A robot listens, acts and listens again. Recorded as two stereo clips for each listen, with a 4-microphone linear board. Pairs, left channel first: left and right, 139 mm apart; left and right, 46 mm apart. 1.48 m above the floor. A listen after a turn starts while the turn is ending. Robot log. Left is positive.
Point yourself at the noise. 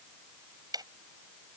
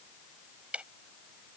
note: The ticking: about 30° right or 150° right.
cmd yaw -30
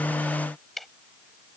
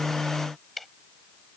end: Facing the ticking.